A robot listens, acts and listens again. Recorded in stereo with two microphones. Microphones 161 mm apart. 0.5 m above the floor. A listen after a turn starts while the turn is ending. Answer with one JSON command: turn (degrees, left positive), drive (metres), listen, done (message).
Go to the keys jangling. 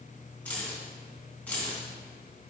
{"turn": 30}
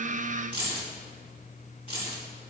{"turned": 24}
{"turn": 145}
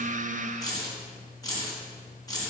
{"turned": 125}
{"turn": 20}
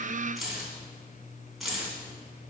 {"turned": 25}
{"drive": 1.0}
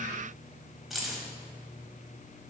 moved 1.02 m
{"drive": 1.0}
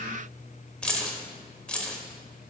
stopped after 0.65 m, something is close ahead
{"done": "Arrived at the keys jangling, straight ahead."}